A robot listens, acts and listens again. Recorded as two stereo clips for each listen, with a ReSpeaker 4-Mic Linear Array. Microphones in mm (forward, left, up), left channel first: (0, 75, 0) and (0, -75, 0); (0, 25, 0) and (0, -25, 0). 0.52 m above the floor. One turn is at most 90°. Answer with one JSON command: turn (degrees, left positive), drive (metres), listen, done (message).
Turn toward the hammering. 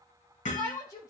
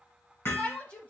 {"turn": 55}
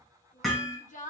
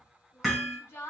{"done": "Found it: hammering, straight ahead, 2 to 4 m away."}